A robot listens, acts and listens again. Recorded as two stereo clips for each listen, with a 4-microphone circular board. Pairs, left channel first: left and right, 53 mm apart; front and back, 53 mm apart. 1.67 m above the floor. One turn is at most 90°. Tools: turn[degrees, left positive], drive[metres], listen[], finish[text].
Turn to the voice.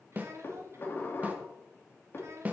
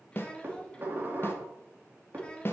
Thought: The child speaking: 70° right.
Action: turn[-70]
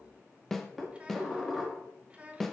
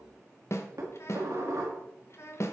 Thought: The child speaking is now 25° right.
Action: turn[-25]
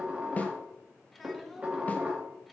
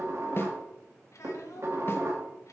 Action: listen[]
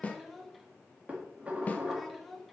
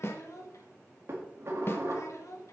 Action: finish[Found it: a child speaking, straight ahead.]